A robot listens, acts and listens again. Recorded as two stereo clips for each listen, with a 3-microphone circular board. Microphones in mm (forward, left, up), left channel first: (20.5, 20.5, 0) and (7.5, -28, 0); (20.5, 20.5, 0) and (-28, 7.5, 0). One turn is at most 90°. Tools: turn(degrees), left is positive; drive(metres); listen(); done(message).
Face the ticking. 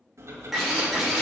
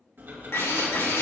turn(degrees=-90)
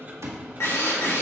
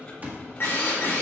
turn(degrees=-45)
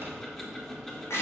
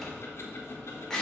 done("Facing the ticking.")